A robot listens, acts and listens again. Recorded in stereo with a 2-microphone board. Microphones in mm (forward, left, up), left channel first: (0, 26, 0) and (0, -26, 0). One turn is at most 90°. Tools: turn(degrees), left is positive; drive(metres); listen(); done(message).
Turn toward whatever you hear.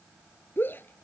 turn(degrees=40)
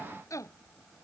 turn(degrees=90)
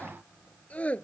turn(degrees=25)
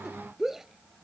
turn(degrees=-10)
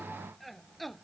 done("Facing the shout.")